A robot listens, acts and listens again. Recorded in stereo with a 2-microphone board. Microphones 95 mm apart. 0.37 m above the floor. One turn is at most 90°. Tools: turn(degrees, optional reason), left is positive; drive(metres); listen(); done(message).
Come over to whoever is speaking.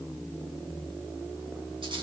listen()
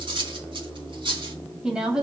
turn(degrees=-30)
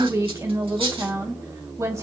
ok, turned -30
turn(degrees=-90, reason="So it is at 140° right.")
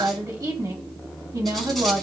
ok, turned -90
turn(degrees=-50, reason="The woman speaking is now 50° right.")
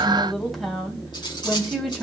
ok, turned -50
drive(metres=1.0)
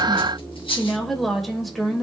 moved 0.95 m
drive(metres=1.0)
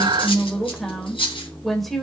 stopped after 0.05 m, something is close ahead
done("Arrived at the woman speaking, straight ahead.")